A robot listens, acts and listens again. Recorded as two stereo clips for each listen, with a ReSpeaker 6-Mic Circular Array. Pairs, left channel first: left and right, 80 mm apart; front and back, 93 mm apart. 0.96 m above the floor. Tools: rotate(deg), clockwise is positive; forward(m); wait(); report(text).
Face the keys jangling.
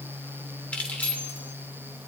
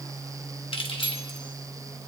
rotate(-20)
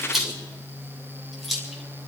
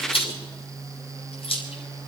report("Found it: keys jangling, straight ahead, 2 to 4 m away.")